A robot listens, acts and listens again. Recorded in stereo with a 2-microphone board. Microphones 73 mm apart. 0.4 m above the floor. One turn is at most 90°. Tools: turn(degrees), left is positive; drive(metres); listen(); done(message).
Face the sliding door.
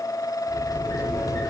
turn(degrees=65)
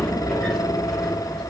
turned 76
turn(degrees=10)
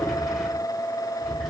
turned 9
done("Facing the sliding door, under 1 m away.")